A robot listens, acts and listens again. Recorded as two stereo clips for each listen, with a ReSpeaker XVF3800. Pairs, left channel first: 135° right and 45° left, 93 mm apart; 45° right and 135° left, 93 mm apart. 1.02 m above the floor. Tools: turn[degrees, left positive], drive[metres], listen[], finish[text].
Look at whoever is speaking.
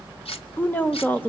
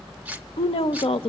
Thought: The woman speaking: 65° right.
Action: turn[-65]
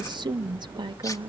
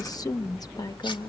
Action: finish[Facing the woman speaking, under 1 m away.]